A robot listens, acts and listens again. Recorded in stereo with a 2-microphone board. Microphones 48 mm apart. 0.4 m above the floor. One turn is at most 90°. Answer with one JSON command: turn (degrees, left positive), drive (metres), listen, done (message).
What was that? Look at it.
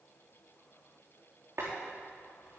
{"turn": -65}
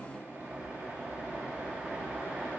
{"turn": -45}
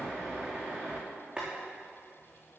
{"turn": -15}
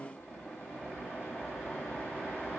{"done": "Facing the boiling."}